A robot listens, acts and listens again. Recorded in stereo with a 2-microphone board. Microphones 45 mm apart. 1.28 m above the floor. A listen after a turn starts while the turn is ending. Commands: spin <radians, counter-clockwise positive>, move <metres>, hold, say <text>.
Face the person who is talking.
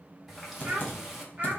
spin -0.44
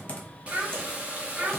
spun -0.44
spin -0.52
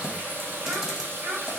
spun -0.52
spin -2.44
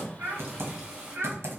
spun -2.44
spin -0.96
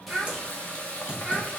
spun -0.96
spin -0.17
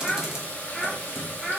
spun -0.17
say Facing the child speaking.